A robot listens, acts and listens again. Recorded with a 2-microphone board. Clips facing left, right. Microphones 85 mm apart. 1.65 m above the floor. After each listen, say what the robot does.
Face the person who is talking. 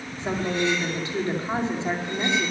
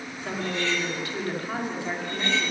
Turn 20° left.
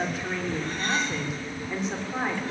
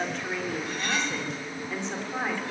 Turn 30° left.
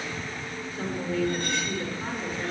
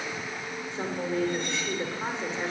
Turn 25° right.
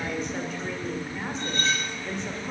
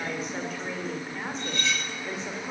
Found it: a woman speaking, straight ahead.